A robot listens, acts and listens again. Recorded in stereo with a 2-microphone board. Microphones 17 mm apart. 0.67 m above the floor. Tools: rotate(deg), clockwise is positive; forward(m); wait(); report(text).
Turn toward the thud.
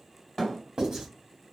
rotate(-20)
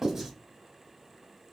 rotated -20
wait()
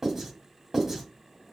report("I heard a thud, but can't make it out now. It was about straight ahead or 140° left.")